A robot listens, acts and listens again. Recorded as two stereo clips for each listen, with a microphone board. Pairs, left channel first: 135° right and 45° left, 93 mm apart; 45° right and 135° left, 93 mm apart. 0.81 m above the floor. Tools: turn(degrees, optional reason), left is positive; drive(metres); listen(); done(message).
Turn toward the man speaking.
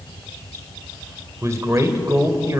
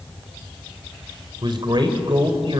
turn(degrees=100, reason="The man speaking: 100° left.")
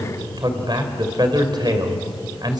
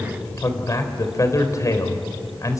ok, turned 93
turn(degrees=10, reason="The man speaking is now 10° left.")
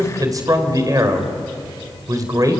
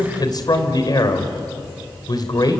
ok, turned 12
done("Facing the man speaking, 2 to 4 m away.")